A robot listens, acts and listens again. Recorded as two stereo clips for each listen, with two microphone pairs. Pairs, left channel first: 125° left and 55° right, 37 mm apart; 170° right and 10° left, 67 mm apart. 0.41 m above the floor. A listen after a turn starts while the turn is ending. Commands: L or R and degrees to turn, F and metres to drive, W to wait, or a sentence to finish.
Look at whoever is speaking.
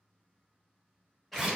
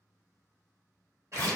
W
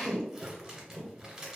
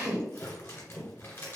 W
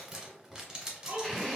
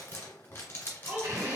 R50
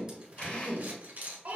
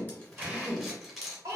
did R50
Facing the child speaking, under 1 m away.